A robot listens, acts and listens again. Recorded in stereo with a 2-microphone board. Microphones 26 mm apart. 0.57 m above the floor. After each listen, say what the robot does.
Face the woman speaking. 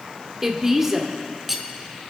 Turn 15° right.
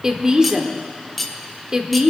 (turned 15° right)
Turn 150° right.
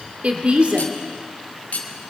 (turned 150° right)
Turn 65° right.
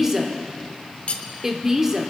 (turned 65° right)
Turn 15° right.
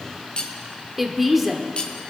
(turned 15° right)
Facing the woman speaking, 1 to 2 m away.